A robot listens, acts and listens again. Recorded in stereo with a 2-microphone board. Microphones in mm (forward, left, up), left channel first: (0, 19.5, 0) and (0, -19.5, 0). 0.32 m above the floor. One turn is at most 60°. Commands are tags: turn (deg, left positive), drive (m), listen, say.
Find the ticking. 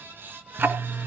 <turn deg="-60"/>
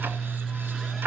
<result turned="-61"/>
<turn deg="-60"/>
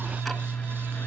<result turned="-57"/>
<say>Found it: ticking, straight ahead, 1 to 2 m away.</say>